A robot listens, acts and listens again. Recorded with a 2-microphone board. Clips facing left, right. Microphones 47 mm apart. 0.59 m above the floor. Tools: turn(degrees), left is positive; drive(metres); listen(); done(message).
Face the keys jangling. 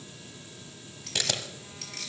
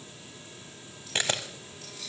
turn(degrees=90)
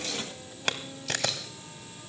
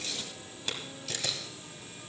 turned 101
turn(degrees=-10)
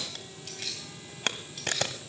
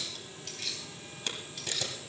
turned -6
done("Found it: keys jangling, straight ahead.")